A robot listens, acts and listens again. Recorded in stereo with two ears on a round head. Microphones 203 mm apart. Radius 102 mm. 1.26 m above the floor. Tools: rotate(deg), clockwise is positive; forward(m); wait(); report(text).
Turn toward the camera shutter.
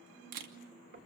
rotate(90)
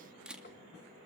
report("Found it: a camera shutter, straight ahead.")